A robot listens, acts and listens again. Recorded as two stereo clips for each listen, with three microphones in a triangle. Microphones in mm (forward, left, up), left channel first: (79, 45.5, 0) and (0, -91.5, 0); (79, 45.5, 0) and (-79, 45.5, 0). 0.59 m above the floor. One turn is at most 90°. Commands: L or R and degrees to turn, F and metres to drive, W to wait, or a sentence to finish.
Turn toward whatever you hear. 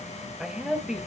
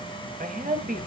L90
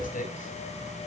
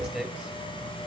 L90
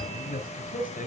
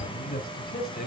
L20
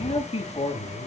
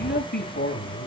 Facing the man speaking, over 4 m away.